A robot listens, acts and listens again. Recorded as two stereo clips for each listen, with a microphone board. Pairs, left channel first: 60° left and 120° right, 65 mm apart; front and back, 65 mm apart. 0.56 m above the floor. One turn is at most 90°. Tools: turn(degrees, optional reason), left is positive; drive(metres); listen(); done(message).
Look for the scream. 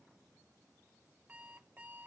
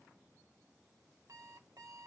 listen()
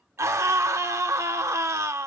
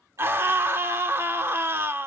turn(degrees=-90, reason="The scream: 140° right.")
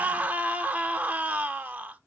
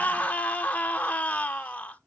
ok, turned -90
turn(degrees=-60, reason="The scream is now 60° right.")
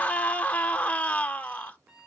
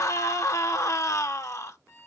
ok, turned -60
done("Facing the scream, 1 to 2 m away.")